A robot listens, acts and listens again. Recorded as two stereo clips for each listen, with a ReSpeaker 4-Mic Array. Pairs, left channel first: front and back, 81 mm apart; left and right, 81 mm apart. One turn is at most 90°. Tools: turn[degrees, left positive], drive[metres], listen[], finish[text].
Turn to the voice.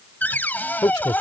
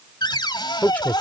Thought: The man speaking: 25° left.
Action: turn[25]
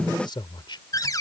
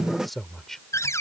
Action: finish[Facing the man speaking.]